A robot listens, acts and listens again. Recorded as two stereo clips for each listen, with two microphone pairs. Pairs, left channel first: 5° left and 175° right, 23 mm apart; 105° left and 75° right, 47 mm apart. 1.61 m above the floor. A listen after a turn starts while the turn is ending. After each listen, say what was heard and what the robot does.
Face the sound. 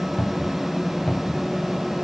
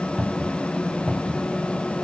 The cupboard door: 15° left. Turn 15° left.
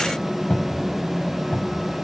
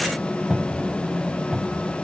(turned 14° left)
Found it: a cupboard door, straight ahead.